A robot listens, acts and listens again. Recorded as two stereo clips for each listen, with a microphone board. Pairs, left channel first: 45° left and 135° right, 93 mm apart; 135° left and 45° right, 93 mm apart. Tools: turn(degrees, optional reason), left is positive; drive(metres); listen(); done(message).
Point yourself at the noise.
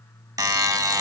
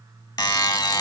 turn(degrees=175, reason="The buzzer: 175° left.")
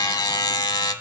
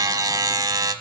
done("Facing the buzzer.")